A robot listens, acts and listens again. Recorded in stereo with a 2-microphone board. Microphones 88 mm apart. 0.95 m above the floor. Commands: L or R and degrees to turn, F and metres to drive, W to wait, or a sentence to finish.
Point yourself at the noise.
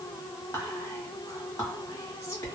L40
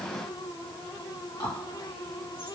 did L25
L110
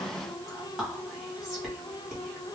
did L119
Found it: whispering, straight ahead, 1 to 2 m away.